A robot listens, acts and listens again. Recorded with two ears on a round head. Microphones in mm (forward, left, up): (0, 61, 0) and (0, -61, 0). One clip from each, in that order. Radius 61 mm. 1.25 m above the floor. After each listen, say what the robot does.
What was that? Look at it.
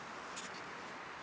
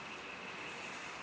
Keep listening.
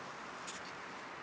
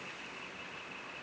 Keep listening.
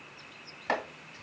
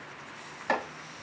Turn 30° left.
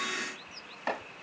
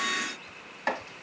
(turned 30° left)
Turn 25° right.
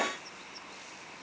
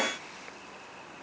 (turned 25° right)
Keep listening.
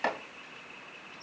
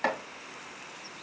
Facing the chopping.